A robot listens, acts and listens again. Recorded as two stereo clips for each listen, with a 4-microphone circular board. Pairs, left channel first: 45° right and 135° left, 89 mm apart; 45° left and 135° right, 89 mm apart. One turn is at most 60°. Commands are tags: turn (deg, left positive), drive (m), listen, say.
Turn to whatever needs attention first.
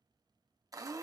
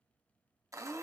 <listen/>
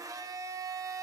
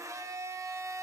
<listen/>
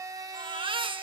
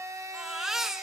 <turn deg="60"/>
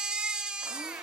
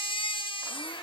<turn deg="55"/>
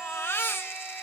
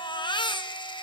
<turn deg="20"/>
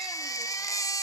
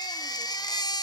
<say>Facing the baby crying, under 1 m away.</say>